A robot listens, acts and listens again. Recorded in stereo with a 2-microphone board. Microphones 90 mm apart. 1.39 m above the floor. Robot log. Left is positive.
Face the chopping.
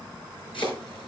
note: The chopping: about 70° left or 110° left.
cmd yaw +70
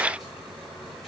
cmd idle
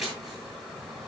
end: Facing the chopping, over 4 m away.